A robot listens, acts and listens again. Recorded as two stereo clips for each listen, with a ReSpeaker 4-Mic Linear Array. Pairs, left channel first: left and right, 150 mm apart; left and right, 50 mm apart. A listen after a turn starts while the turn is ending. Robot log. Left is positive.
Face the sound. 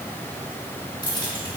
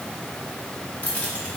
note: The keys jangling: about 25° left or 155° left.
cmd yaw +25
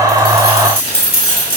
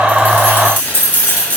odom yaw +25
note: The keys jangling: about 30° left or 150° left.
cmd yaw +30
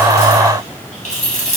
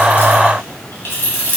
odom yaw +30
note: So it is at 130° left.
cmd yaw +130
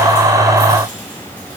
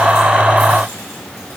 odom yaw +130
cmd idle
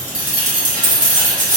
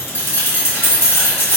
note: The keys jangling is now 55° left.
cmd yaw +55
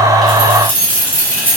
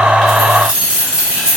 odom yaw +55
note: The keys jangling is now 15° right.
cmd yaw -15
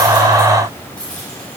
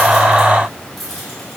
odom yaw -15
end: Facing the keys jangling, 2 to 4 m away.